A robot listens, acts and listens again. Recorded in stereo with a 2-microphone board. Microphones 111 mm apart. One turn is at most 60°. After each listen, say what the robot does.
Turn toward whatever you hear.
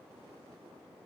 Keep listening.
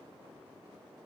Keep listening.
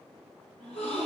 Turn 30° left.
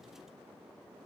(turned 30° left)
Keep listening.
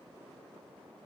I heard a gasp, but can't make it out now. It was about 20° right or 140° left.